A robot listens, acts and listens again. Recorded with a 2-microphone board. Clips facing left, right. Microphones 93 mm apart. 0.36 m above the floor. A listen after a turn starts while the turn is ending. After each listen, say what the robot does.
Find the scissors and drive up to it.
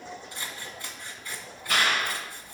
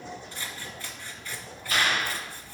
Turn 15° left.
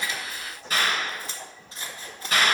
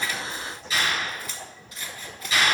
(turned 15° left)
Turn 150° left.
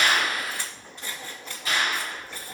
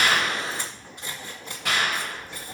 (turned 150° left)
Turn 20° right.
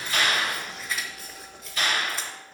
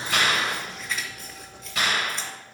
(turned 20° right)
Drive 1.0 m forward.
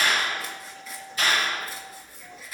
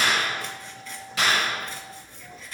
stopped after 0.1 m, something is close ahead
Blocked. The scissors is further on, straight ahead.